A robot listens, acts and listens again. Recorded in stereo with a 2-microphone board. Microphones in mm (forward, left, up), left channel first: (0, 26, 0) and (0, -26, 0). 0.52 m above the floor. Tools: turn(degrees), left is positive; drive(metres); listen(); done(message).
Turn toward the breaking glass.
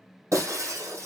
turn(degrees=-70)
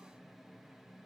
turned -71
listen()
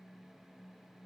done("I heard breaking glass, but can't make it out now. It was about straight ahead or 40° right.")